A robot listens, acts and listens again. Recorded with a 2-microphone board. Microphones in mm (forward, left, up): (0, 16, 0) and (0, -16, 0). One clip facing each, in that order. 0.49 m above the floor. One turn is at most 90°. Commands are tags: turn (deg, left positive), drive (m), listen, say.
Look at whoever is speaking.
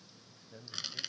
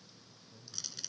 <turn deg="70"/>
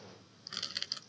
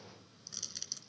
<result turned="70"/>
<listen/>
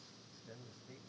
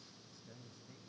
<turn deg="15"/>
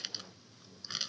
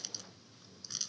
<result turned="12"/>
<listen/>
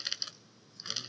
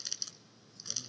<listen/>
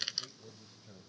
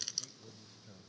<say>Facing the man speaking.</say>